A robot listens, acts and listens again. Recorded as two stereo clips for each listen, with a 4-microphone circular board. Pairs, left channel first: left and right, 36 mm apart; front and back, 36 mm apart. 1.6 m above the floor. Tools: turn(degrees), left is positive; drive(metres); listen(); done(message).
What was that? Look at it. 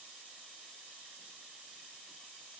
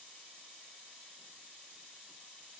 listen()
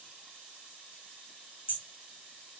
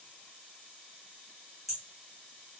turn(degrees=85)
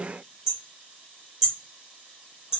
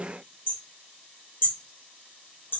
turn(degrees=-15)
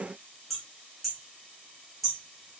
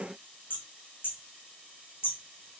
done("Facing the hammering.")